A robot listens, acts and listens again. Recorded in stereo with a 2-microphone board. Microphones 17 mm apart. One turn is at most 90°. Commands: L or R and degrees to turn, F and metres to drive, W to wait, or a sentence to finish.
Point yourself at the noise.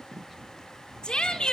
L70
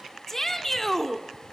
L25
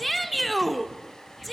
Found it: a shout, straight ahead.